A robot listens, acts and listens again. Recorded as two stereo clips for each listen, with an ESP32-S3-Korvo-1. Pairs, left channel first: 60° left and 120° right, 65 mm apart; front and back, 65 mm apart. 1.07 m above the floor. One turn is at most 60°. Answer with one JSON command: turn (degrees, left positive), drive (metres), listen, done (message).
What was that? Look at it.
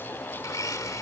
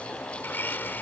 {"turn": 55}
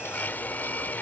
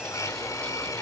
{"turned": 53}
{"done": "Found it: a blender, straight ahead."}